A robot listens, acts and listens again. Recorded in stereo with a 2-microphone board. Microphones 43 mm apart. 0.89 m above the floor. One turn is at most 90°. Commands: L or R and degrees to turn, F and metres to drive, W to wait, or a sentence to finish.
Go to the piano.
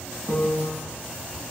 L50
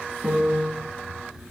F1.0
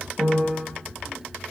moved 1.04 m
R10
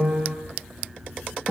F1.0
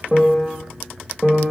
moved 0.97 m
L10
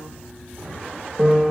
F1.0
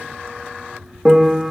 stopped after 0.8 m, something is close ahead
Arrived at the piano, straight ahead.